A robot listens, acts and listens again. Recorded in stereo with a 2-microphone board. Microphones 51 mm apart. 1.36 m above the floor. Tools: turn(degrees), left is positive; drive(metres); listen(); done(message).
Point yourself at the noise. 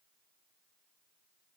listen()
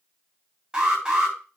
turn(degrees=-30)
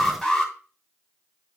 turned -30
turn(degrees=15)
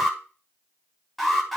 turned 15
done("Found it: an alarm, straight ahead, 2 to 4 m away.")